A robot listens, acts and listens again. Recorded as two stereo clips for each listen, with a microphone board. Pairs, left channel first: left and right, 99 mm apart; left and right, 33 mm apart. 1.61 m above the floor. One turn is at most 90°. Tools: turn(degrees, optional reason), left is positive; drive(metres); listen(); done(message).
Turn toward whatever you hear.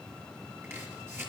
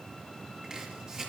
turn(degrees=-25, reason="The chopping: about 25° right or 155° right.")
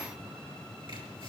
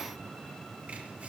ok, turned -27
listen()
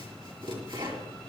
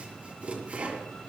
turn(degrees=-90, reason="So it is at 125° right.")
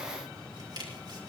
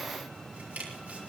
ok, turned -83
turn(degrees=-45, reason="The chopping is now 45° right.")
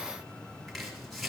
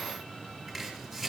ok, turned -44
done("Found it: chopping, straight ahead.")